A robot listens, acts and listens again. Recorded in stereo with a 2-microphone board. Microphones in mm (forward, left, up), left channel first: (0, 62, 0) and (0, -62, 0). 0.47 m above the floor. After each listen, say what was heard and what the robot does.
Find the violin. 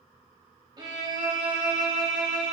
The violin: about 35° right or 145° right. Turn 35° right.
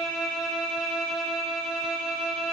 Facing the violin.